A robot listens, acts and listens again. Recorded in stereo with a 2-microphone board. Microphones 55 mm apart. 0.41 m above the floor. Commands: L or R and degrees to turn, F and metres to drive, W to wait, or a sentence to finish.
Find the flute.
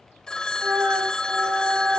R50
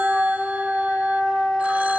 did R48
Facing the flute.